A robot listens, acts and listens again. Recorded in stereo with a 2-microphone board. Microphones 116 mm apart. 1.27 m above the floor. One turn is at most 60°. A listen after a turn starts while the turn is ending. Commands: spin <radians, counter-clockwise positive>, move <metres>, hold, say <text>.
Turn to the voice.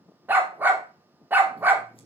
hold
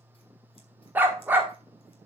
hold
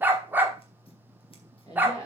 spin 0.52
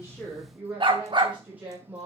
spin -0.26
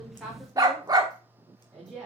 say Facing the woman speaking.